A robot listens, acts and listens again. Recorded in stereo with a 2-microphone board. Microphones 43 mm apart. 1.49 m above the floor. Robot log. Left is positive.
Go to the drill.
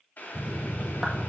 cmd yaw +90
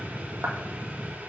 cmd fwd 1.0
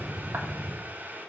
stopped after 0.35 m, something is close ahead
end: Blocked. The drill is further on, straight ahead.